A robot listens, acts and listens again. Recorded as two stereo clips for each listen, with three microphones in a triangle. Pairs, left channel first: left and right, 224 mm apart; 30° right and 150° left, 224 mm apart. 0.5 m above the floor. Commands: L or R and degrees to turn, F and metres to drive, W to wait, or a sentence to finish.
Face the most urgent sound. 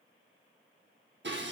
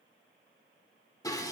W
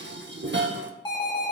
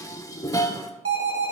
L160
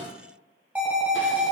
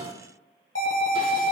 Facing the alarm.